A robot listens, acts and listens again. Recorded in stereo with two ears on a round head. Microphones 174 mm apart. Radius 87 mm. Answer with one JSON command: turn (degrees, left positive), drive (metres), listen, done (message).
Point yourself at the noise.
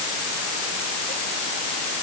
{"listen": true}
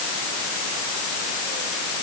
{"listen": true}
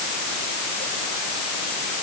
{"done": "I can't make out anything."}